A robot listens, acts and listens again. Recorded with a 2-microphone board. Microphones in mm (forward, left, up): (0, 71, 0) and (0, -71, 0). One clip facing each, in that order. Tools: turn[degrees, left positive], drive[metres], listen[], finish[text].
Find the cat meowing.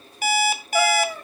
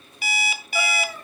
Thought: The cat meowing: about 60° left or 120° left.
Action: turn[60]
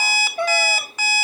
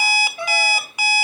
Thought: So it is at 60° left.
Action: turn[60]
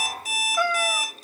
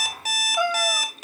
Thought: The cat meowing is now 15° right.
Action: turn[-15]
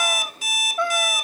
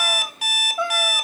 Action: finish[Facing the cat meowing, 1 to 2 m away.]